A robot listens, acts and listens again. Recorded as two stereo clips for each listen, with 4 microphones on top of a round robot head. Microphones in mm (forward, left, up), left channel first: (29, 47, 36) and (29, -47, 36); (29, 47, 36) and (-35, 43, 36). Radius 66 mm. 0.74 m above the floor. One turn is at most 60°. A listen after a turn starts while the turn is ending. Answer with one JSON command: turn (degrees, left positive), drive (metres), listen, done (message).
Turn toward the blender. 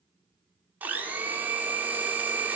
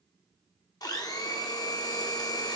{"turn": -20}
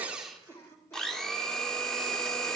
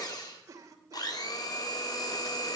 {"done": "Found it: a blender, straight ahead, 2 to 4 m away."}